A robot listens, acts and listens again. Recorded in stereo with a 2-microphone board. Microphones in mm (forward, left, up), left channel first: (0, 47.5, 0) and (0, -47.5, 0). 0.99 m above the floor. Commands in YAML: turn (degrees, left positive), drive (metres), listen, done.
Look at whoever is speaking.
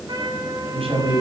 turn: -90
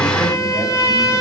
listen: true
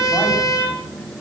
listen: true
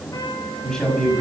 done: "Found it: a man speaking, straight ahead."